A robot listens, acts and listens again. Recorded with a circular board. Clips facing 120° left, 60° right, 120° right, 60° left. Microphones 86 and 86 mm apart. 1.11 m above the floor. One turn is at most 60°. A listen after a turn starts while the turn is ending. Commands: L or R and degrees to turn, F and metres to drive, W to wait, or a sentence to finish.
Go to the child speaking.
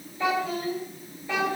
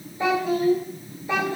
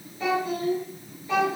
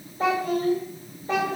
L15
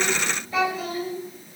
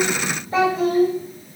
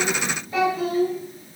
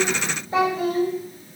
F1.0
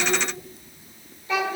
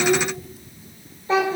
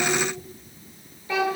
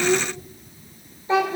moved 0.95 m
F1.0
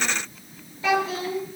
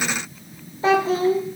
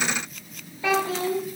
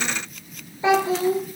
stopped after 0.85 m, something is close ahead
Arrived at the child speaking, straight ahead.